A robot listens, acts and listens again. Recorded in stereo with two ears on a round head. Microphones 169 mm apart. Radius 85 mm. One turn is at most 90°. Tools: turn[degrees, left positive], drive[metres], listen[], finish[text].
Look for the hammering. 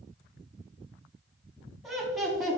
Action: listen[]
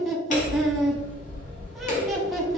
Thought: The hammering: about 40° left or 140° left.
Action: turn[40]
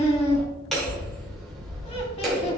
Action: finish[Found it: hammering, straight ahead.]